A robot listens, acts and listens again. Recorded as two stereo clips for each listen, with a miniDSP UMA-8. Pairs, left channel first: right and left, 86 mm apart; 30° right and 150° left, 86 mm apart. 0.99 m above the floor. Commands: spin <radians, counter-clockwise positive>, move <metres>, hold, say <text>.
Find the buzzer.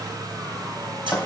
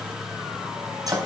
hold
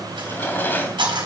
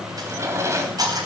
hold
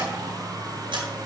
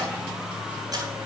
say I can't make out a buzzer to turn to.